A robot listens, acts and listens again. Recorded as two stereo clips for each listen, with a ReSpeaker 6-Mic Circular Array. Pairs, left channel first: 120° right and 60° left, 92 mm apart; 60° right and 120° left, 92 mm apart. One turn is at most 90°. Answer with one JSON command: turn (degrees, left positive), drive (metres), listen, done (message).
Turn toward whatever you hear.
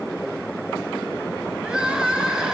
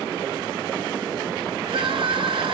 {"turn": 90}
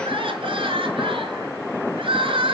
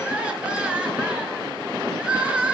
{"turn": 40}
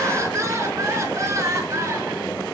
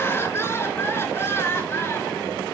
{"done": "Facing the crying, 2 to 4 m away."}